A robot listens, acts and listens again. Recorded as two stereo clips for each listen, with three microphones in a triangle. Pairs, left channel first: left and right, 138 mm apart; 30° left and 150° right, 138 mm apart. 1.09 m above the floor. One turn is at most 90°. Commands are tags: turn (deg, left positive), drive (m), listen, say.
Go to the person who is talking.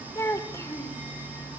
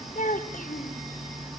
<turn deg="20"/>
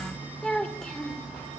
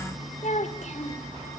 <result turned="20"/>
<drive m="1.0"/>
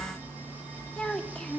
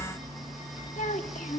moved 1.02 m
<drive m="1.0"/>
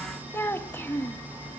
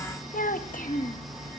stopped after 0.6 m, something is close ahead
<turn deg="15"/>
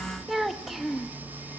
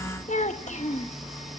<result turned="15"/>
<say>I am next to the child speaking.</say>